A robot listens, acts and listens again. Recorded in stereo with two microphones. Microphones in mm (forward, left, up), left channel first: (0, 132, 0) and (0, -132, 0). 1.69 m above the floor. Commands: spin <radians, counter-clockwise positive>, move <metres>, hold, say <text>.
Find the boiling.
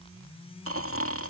hold
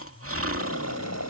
spin 1.57
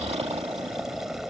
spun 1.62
say Facing the boiling.